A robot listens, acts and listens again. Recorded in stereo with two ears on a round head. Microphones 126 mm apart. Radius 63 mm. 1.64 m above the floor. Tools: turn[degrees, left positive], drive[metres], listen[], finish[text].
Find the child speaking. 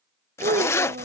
Thought: The child speaking: about 60° right or 120° right.
Action: turn[-60]
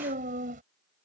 Thought: So it is at 60° right.
Action: turn[-60]
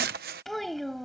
Action: finish[Facing the child speaking.]